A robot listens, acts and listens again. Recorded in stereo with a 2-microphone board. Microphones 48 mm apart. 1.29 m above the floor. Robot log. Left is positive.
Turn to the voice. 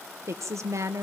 note: The woman speaking: about 70° right or 110° right.
cmd yaw -70
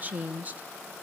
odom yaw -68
note: So it is at 30° right.
cmd yaw -30
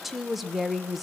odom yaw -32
end: Facing the woman speaking, 1 to 2 m away.